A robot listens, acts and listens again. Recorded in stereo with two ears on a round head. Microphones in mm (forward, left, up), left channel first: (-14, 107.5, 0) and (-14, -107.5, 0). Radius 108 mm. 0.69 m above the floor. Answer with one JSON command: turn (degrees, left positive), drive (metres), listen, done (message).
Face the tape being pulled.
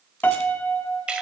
{"listen": true}
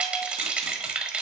{"listen": true}
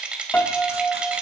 {"done": "I can't make out tape being pulled, only a rattle and a piano."}